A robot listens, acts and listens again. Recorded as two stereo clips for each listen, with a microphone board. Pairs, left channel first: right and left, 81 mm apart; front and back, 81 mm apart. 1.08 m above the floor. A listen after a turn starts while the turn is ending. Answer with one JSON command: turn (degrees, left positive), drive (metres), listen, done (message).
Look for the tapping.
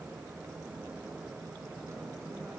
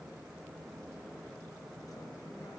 {"listen": true}
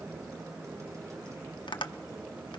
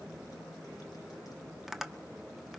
{"turn": -90}
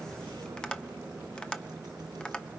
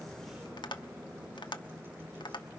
{"turn": -10}
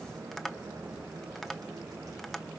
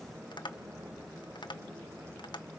{"done": "Found it: tapping, straight ahead, 1 to 2 m away."}